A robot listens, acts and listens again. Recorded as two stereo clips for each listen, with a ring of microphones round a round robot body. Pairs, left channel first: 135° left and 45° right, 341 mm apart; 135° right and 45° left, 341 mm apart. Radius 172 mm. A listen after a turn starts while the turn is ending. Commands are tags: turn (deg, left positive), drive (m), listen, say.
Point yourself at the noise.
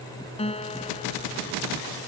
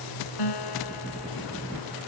<turn deg="-150"/>
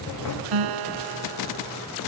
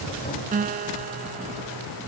<turn deg="-20"/>
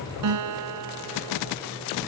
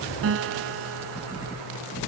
<turn deg="-10"/>
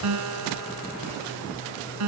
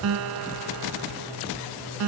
<say>Facing the guitar.</say>